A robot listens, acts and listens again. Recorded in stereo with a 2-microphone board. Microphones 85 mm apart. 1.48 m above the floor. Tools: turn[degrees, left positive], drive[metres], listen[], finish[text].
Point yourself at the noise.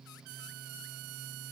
Action: listen[]
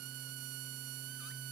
Action: listen[]
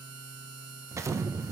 Thought: The explosion: about 35° right or 145° right.
Action: turn[-35]
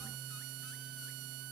Action: listen[]
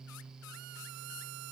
Action: finish[I heard an explosion, but can't make it out now. It was about straight ahead or 110° right.]